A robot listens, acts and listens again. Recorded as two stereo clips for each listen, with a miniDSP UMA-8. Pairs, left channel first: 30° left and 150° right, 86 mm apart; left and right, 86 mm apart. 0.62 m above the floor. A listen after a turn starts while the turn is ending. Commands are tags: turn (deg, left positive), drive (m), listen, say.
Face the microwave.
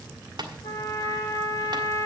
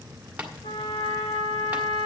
<listen/>
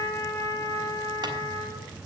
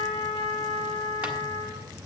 <listen/>
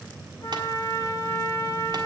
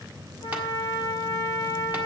<say>I can't make out a microwave to turn to.</say>